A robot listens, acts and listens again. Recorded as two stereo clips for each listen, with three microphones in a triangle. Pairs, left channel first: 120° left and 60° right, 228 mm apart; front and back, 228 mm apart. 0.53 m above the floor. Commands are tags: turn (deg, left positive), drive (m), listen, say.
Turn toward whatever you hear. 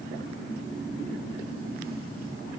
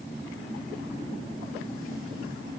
<listen/>
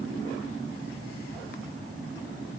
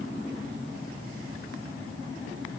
<listen/>
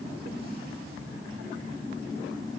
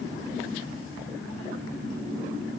<say>I can't make out anything to turn to.</say>